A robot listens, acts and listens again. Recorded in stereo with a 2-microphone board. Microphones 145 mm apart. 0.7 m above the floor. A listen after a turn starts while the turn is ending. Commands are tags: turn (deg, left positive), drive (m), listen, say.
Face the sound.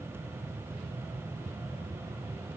<listen/>
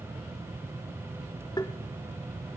<turn deg="30"/>
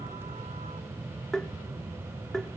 <say>Found it: tapping, straight ahead.</say>